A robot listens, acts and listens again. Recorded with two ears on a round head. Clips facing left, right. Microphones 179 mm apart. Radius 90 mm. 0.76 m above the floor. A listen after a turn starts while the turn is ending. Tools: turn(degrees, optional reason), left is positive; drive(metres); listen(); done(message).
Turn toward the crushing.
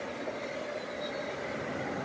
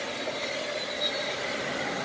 listen()
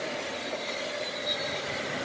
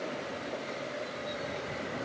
listen()
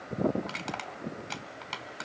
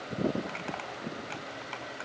turn(degrees=55, reason="The crushing: about 55° left or 125° left.")
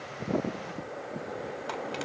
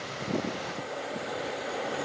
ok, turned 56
listen()
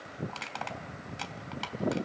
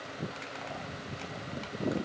turn(degrees=70, reason="So it is at 70° left.")
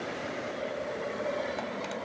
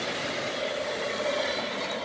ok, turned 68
listen()
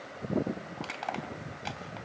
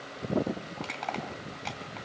done("Found it: crushing, straight ahead, 2 to 4 m away.")